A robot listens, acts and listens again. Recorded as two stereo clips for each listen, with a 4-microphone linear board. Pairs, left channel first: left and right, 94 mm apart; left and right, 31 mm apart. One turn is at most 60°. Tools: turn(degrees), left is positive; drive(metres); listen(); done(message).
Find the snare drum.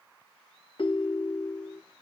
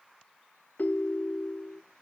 listen()
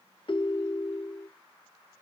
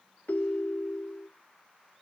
listen()
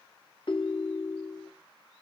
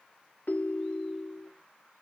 done("I can't make out a snare drum to turn to.")